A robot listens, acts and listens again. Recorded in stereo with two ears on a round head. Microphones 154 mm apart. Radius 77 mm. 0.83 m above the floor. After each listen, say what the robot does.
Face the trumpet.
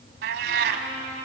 Turn 45° left.
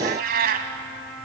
Found it: a trumpet, straight ahead.